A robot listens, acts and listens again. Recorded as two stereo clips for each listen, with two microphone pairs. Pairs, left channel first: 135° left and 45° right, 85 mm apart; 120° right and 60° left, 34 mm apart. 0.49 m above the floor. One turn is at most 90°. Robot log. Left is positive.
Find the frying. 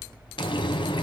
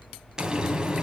note: The frying: 130° left.
cmd yaw +90
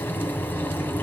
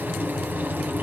note: The frying is now 70° left.
cmd yaw +70
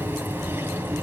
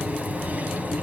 note: The frying is now 20° left.
cmd yaw +20
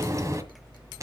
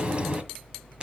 end: Facing the frying, 1 to 2 m away.